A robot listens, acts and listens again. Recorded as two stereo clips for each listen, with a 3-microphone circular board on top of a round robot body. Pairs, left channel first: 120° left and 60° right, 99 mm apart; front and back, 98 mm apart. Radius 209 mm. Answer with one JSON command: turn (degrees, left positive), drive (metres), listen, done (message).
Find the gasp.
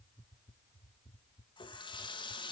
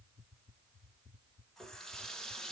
{"listen": true}
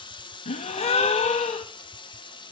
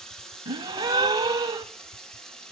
{"turn": 130}
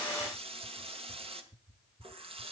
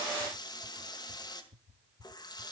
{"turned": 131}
{"done": "I heard a gasp from this way, but can't make it out now."}